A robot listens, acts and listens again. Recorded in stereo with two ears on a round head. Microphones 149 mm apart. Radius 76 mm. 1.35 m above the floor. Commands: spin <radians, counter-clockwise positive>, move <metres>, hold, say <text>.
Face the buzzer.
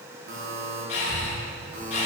spin -1.13
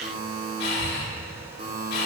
spin -0.87
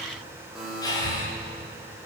say Facing the buzzer.